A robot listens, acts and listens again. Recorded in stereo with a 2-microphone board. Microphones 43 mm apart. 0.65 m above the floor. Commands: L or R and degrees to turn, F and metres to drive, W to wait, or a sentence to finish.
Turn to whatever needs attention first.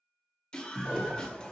L30
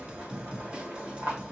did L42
R30
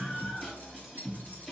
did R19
R10
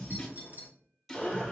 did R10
Found it: a scream, straight ahead, 1 to 2 m away.